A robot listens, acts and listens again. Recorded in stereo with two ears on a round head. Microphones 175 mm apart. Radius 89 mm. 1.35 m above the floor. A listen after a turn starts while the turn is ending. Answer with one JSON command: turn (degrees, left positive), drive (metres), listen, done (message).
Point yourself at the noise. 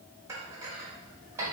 {"turn": -15}
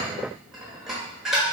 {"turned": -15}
{"done": "Facing the dishes clattering."}